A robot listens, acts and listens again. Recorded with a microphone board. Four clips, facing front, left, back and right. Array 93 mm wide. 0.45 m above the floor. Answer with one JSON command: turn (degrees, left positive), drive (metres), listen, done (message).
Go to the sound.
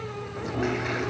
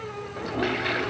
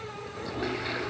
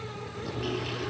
{"turn": 75}
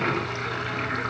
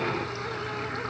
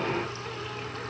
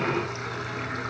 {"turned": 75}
{"turn": -10}
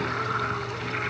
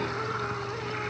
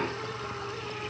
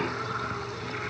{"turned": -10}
{"drive": 1.0}
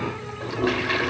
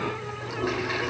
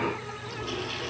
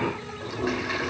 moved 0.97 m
{"drive": 1.0}
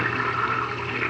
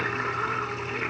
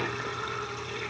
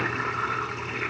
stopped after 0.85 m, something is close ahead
{"done": "I am next to the toilet flushing."}